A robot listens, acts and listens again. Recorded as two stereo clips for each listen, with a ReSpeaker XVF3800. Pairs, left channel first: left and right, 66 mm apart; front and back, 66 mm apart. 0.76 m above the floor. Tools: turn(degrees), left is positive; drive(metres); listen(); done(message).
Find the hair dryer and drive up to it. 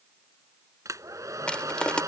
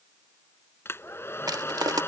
turn(degrees=-55)
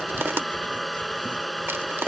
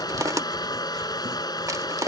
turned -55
drive(metres=1.0)
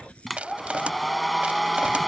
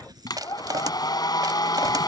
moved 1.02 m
drive(metres=1.0)
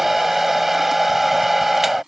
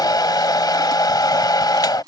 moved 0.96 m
drive(metres=1.0)
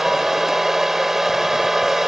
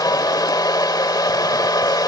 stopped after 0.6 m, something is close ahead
done("Arrived at the hair dryer, straight ahead.")